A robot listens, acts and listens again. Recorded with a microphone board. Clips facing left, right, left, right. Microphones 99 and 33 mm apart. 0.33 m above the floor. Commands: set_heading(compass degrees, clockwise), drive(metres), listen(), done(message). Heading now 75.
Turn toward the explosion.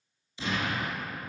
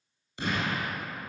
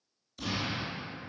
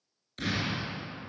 set_heading(130)
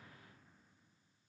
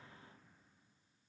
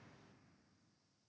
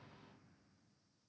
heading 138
listen()
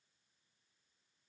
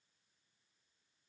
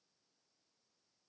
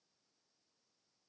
done("I heard an explosion, but can't make it out now. It was about 5° left or 60° right.")